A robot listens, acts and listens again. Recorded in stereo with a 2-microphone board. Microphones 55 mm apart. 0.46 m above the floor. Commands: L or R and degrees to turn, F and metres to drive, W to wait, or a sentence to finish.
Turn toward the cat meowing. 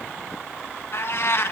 L50
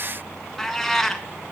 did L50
Facing the cat meowing, 1 to 2 m away.